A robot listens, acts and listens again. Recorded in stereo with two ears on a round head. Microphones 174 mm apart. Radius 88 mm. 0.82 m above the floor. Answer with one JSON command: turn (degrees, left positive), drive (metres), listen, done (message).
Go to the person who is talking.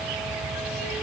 {"listen": true}
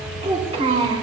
{"turn": -35}
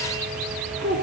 {"turn": -115}
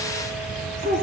{"turn": -40}
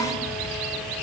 {"listen": true}
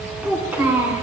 {"turn": -10}
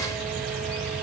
{"listen": true}
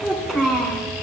{"drive": 1.0}
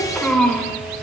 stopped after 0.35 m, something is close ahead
{"done": "Blocked. The child speaking is further on, straight ahead."}